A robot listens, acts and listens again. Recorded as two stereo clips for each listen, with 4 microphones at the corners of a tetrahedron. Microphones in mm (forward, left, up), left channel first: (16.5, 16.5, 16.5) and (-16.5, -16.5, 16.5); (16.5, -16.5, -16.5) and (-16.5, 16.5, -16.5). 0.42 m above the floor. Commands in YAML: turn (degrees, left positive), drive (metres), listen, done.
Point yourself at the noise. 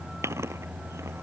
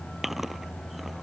turn: -140
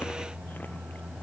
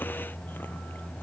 listen: true
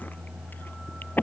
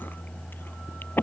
done: "Facing the chewing."